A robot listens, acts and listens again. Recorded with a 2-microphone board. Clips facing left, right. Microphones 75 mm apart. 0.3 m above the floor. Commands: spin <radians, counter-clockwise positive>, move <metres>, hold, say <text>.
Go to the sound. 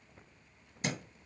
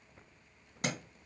spin -1.13
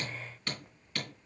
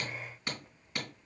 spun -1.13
spin -0.35
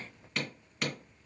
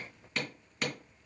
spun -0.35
move 1.0
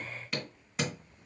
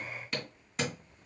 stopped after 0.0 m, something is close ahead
say Something is in my way. I am facing the hammering but have not reached it.